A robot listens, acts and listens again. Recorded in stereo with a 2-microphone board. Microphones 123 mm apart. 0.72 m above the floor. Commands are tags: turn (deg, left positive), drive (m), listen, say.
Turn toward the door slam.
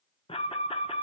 <listen/>
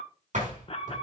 <turn deg="-90"/>
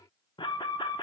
<say>Facing where the door slam came from. I can't hear it now.</say>